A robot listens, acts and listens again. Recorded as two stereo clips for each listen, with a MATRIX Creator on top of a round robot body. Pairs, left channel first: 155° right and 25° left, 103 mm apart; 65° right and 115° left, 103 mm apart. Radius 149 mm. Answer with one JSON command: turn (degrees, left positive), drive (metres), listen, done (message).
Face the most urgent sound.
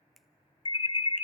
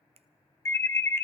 {"turn": -130}
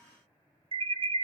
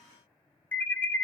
{"done": "Found it: an alarm, straight ahead."}